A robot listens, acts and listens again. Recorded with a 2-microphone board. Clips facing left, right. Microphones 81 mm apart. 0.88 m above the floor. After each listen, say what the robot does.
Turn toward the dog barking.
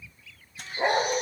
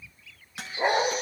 Turn 30° right.
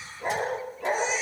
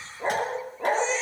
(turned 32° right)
Turn 145° right.
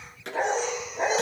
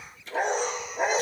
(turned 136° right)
Turn 10° right.
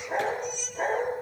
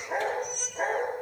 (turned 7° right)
Found it: a dog barking, straight ahead.